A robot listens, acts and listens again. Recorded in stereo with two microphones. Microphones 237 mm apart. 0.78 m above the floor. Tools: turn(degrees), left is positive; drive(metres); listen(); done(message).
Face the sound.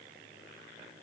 listen()
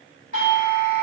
turn(degrees=-35)
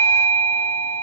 done("Found it: a doorbell, straight ahead.")